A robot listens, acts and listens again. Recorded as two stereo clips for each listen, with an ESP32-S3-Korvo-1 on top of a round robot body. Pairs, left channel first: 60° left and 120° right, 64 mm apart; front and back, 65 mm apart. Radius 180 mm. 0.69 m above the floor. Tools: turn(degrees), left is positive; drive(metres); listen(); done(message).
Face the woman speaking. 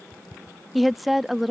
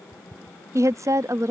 turn(degrees=150)
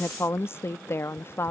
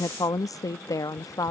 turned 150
turn(degrees=10)
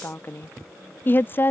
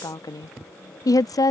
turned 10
done("Facing the woman speaking.")